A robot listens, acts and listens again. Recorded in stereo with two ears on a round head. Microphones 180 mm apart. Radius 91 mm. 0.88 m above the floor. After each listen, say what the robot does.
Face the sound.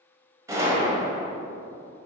Turn 15° right.
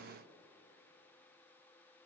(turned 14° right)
Keep listening.
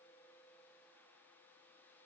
I heard a gunshot, but can't make it out now. It was about straight ahead or 150° right.